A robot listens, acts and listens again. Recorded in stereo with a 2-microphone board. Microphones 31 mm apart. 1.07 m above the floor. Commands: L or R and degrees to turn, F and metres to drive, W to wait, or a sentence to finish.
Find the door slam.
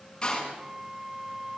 L20
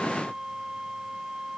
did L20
W
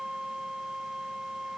I heard a door slam, but can't make it out now. It was about straight ahead or 140° left.